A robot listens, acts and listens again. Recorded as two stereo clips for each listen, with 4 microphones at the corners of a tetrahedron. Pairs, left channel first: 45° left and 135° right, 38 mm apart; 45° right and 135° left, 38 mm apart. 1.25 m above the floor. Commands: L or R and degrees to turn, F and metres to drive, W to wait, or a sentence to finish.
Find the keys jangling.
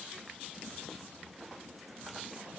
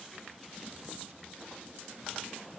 W
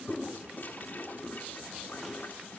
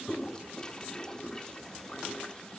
W
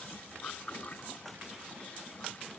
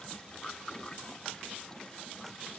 I can't make out keys jangling, only a toilet flushing.